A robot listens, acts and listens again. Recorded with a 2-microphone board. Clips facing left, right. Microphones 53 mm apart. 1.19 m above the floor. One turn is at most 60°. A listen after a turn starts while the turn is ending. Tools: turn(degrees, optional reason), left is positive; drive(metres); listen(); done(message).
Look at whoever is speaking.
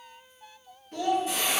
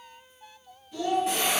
turn(degrees=50, reason="The child speaking: about 50° left or 130° left.")
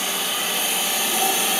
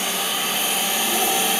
listen()
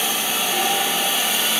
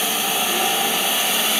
listen()
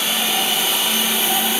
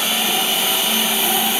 done("I heard a child speaking, but can't make it out now. It was about straight ahead or 80° left.")